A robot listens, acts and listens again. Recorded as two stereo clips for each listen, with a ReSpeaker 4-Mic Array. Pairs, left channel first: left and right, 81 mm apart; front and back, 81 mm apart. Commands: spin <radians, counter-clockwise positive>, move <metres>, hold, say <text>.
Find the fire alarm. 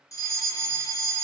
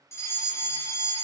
spin 0.87
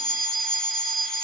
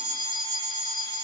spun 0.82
say Found it: a fire alarm, straight ahead.